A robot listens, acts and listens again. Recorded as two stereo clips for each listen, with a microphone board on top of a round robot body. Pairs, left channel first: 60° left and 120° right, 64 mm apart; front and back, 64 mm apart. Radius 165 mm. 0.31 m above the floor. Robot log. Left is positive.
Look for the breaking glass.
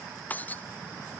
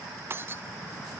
note: The breaking glass: 125° left.
cmd yaw +125
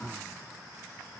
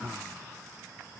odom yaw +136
note: Nothing new. It was at 10° right.
cmd yaw -10
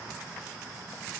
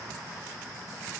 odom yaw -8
end: I heard breaking glass from this way, but can't make it out now.